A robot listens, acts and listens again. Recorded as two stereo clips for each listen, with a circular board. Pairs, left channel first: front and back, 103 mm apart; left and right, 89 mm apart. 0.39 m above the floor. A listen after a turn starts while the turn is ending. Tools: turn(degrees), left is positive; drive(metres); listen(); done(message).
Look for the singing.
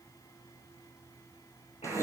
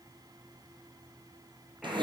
listen()
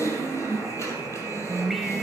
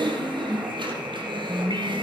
turn(degrees=-90)
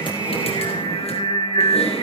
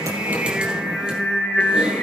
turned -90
turn(degrees=20)
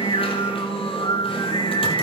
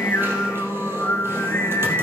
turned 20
turn(degrees=30)
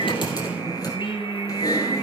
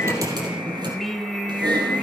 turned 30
done("Facing the singing.")